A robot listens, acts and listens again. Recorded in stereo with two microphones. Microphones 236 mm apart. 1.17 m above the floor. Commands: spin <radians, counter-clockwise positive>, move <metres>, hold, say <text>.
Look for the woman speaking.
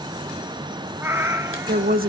spin -0.70
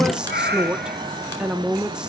say Facing the woman speaking.